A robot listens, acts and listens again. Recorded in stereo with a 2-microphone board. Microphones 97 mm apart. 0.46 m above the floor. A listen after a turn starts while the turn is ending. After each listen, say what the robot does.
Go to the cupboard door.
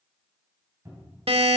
Turn 35° right.
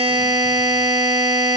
Keep listening.
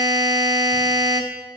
Keep listening.
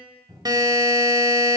Turn 110° right.
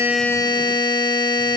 Keep listening.
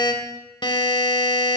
Keep listening.
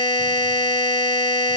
Facing where the cupboard door came from. I can't hear it now. I did not reach it.